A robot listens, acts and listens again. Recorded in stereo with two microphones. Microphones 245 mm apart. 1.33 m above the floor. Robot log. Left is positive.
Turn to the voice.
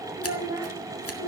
cmd yaw -30
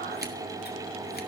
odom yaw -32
cmd idle
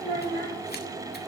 note: So it is at 20° left.
cmd yaw +20
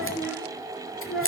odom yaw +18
end: Facing the child speaking, over 4 m away.